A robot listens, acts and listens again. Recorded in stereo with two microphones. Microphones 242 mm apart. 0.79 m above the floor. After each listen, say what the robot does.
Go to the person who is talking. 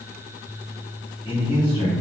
Turn 20° left.
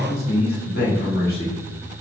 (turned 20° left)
Turn 135° left.
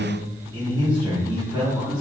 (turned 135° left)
Turn 20° right.
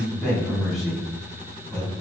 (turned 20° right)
Drive 1.0 m forward.
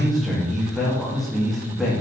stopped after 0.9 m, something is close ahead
Arrived at the man speaking, straight ahead.